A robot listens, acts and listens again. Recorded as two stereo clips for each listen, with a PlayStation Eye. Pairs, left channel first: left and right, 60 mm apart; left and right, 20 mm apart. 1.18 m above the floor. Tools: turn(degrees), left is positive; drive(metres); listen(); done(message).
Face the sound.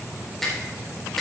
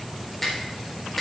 turn(degrees=30)
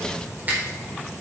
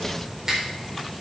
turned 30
turn(degrees=-25)
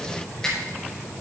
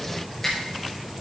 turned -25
turn(degrees=15)
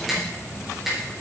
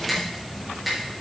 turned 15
done("Facing the finger snap, over 4 m away.")